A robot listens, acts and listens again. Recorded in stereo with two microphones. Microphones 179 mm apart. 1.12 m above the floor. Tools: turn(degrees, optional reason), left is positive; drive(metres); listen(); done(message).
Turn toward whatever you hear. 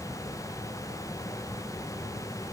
listen()
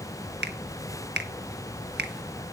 turn(degrees=-65, reason="The finger snap: about 65° right or 115° right.")
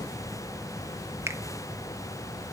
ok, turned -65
turn(degrees=-15, reason="So it is at 15° right.")
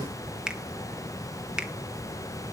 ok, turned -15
done("Facing the finger snap, 1 to 2 m away.")